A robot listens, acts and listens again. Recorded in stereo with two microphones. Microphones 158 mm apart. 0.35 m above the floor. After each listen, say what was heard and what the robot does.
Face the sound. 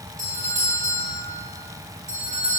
The doorbell: about 50° right or 130° right. Turn 50° right.
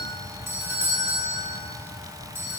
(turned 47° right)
So it is at 15° right. Turn 15° right.
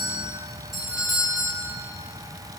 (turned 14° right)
Facing the doorbell, 2 to 4 m away.